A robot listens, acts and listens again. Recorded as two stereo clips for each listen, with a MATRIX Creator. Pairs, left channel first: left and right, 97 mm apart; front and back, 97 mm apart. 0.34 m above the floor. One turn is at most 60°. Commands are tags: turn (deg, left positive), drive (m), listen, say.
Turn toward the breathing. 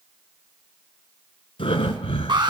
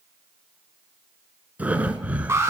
<turn deg="60"/>
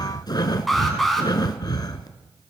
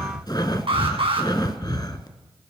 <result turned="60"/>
<turn deg="45"/>
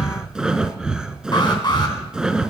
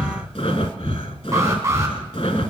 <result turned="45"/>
<turn deg="-10"/>
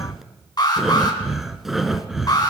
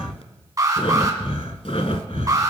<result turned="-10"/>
<say>Facing the breathing, under 1 m away.</say>